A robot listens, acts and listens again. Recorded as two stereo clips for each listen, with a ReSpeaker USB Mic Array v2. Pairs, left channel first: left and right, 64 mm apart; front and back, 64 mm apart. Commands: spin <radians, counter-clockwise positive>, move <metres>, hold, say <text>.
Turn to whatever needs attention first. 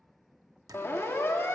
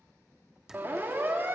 spin 2.27
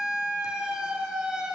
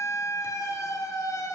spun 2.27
spin -0.26
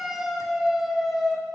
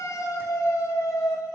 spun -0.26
say Found it: a siren, straight ahead, 2 to 4 m away.